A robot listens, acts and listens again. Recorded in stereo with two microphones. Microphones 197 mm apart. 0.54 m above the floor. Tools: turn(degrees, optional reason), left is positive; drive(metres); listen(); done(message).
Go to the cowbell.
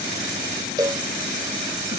turn(degrees=-20, reason="The cowbell: about 20° right or 160° right.")
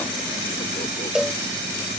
drive(metres=1.0)
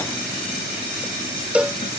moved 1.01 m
turn(degrees=-10, reason="The cowbell is now 10° right.")
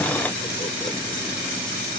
listen()
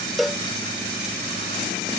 drive(metres=1.0)
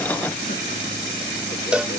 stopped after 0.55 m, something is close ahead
turn(degrees=-10, reason="The cowbell is now 10° right.")
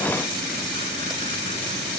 listen()
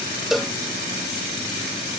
done("Arrived at the cowbell, straight ahead.")